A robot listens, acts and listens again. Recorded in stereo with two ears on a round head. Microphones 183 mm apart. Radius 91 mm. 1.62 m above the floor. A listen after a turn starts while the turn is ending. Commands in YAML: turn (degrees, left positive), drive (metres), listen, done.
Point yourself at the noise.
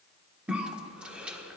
turn: -30
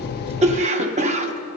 turn: -145
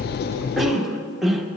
done: "Facing the cough."